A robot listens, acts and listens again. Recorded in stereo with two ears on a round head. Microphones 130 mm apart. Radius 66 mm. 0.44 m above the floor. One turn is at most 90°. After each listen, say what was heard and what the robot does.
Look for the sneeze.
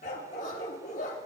Keep listening.
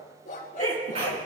The sneeze: about 40° right or 140° right. Turn 40° right.
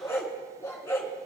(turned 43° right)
Keep listening.
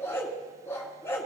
I heard a sneeze, but can't make it out now. It was about 5° left or 100° right.